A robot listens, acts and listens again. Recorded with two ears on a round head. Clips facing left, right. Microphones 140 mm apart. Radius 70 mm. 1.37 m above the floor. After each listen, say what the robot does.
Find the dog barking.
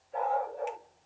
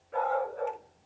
Turn 90° right.
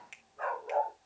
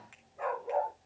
Turn 10° right.
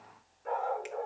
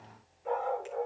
Found it: a dog barking, straight ahead.